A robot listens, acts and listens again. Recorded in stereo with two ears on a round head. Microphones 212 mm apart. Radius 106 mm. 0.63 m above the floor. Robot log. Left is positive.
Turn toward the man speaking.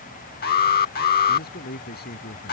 note: The man speaking: about 40° left or 140° left.
cmd yaw +40
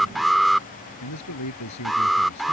note: So it is at 95° left.
cmd yaw +95
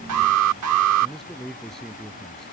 end: Found it: a man speaking, straight ahead.